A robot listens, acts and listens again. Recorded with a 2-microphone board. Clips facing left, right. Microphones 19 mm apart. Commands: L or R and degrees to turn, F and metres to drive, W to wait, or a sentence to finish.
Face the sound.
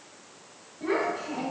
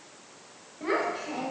R55
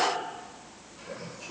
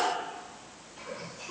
R75
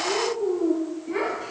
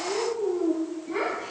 L10
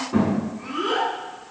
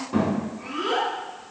Found it: a child speaking, straight ahead.